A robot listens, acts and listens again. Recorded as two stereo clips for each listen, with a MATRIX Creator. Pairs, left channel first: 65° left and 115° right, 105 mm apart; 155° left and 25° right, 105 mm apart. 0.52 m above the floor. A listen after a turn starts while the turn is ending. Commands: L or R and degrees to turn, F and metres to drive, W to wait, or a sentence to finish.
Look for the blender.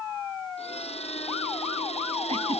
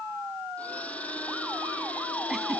L80
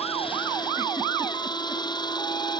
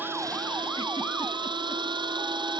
L20
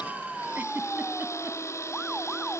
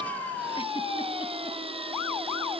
Found it: a blender, straight ahead.